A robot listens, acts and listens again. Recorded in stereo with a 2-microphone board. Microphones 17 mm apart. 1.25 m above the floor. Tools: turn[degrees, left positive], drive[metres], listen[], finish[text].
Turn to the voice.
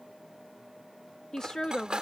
Thought: The woman speaking: about 35° left or 145° left.
Action: turn[35]
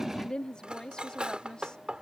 Thought: So it is at 120° left.
Action: turn[120]
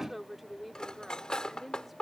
Thought: The woman speaking is now 10° right.
Action: turn[-10]
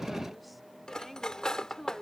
Action: finish[Found it: a woman speaking, straight ahead.]